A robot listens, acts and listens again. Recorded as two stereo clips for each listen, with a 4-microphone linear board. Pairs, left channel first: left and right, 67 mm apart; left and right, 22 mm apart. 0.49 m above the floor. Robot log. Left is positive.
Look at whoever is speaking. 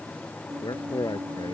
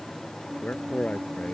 cmd yaw +90
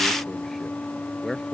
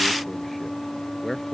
end: Facing the man speaking.